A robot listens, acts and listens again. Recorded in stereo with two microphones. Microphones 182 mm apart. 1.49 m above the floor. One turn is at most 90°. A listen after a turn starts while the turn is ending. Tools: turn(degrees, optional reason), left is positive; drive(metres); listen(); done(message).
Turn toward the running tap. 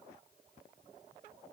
listen()
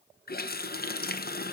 turn(degrees=60, reason="The running tap: about 60° left or 120° left.")
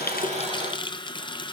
turn(degrees=30, reason="So it is at 30° left.")
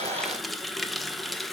done("Facing the running tap, under 1 m away.")